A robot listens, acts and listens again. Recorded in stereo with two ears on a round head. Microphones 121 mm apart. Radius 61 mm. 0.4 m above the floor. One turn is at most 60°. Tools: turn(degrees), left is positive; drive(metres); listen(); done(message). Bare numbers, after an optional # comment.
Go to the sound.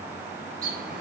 # The bird: about 65° right or 115° right.
turn(-60)
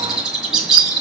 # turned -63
drive(1.0)
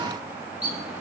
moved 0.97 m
# The bird is now 10° right.
turn(-10)
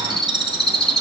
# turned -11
drive(1.0)
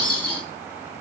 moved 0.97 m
# The bird is now 10° left.
turn(10)
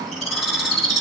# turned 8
drive(1.0)
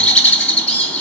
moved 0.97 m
drive(1.0)
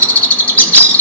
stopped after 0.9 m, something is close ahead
# The bird is now 15° left.
turn(15)
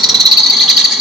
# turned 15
done("Arrived at the bird, straight ahead.")